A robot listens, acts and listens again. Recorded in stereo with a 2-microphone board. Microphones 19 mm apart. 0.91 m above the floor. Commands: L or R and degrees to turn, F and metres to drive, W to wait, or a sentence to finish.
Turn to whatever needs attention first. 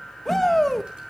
L30
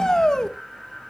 L135
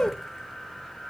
L50
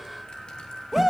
R10
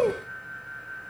Facing the shout.